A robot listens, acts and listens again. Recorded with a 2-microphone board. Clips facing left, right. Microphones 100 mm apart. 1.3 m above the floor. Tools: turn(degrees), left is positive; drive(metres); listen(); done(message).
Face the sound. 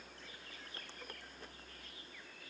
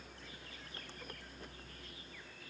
listen()
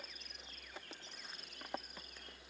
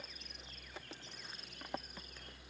listen()
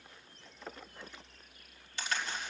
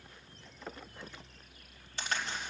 turn(degrees=-35)
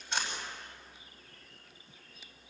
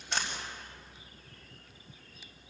turn(degrees=-110)
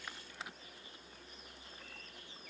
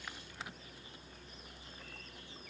done("Facing where the crack came from. I can't hear it now.")